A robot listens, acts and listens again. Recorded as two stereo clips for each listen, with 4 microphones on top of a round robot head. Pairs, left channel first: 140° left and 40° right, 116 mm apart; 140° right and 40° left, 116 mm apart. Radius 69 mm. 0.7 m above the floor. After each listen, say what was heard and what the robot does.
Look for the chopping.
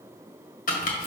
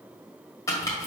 The chopping: 155° left. Turn 155° left.
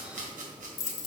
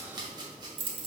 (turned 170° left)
The chopping is now 15° right. Turn 15° right.
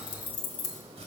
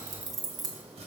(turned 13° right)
Keep listening.
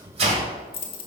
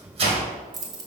Found it: chopping, straight ahead, 1 to 2 m away.